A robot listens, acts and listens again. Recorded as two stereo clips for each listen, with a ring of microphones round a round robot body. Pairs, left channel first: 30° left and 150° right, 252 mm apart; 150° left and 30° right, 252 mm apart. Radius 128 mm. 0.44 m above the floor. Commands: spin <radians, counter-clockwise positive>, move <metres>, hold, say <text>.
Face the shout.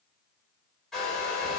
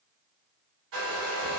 hold
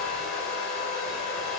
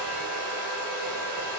hold
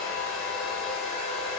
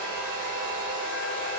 say I can't make out a shout to turn to.